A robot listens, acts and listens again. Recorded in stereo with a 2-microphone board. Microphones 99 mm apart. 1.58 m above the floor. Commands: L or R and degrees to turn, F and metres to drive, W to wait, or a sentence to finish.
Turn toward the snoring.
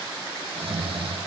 R65
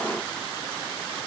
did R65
W
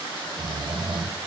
R50
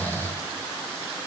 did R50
L20
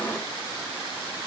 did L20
W
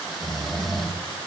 Found it: snoring, straight ahead.